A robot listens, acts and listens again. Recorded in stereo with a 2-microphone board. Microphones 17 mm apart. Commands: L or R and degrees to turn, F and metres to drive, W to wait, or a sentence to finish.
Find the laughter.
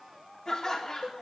L45
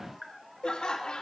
L100
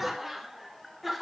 R15
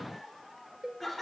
Facing the laughter.